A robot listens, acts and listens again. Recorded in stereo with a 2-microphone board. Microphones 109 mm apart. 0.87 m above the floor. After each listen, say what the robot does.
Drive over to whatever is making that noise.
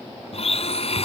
Turn 65° left.
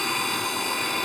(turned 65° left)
Drive 1.0 m forward.
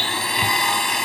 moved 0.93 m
Drive 1.0 m forward.
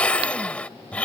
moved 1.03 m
Turn 10° left.
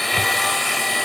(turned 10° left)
Drive 1.0 m forward.
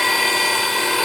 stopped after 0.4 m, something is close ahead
I am next to the blender.